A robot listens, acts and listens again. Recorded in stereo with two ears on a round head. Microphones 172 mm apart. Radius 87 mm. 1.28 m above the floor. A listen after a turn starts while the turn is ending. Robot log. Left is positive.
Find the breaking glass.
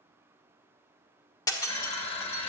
note: The breaking glass: about 20° left or 160° left.
cmd yaw +20
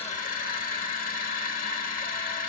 cmd idle
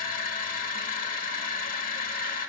end: I heard breaking glass, but can't make it out now. It was about straight ahead or 140° left.